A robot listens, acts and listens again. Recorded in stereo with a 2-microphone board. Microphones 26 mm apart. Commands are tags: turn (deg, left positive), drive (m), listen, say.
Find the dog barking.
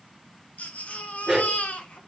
<turn deg="-20"/>
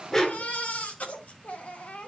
<turn deg="20"/>
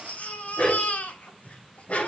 <turn deg="60"/>
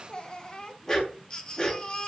<turn deg="15"/>
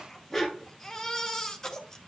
<say>Facing the dog barking.</say>